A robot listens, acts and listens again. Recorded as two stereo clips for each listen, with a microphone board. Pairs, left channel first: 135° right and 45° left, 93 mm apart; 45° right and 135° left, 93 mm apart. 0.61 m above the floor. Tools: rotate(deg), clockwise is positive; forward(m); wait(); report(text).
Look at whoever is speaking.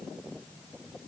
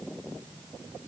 wait()
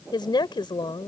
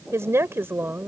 rotate(160)
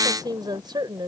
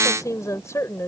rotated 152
rotate(-15)
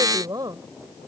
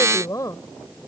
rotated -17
report("Found it: a woman speaking, straight ahead.")